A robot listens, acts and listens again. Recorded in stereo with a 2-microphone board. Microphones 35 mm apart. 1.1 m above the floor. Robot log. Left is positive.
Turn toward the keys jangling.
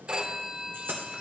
note: The keys jangling: about 65° right or 115° right.
cmd yaw -65
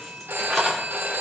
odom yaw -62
note: So it is at 10° left.
cmd yaw +10
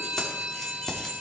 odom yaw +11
note: The keys jangling is now 20° left.
cmd yaw +20
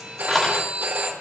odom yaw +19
note: The keys jangling is now 10° left.
cmd yaw +10
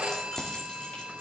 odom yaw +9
note: The keys jangling is now 25° left.
cmd yaw +25
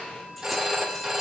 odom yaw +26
cmd idle
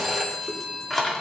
end: Found it: keys jangling, straight ahead.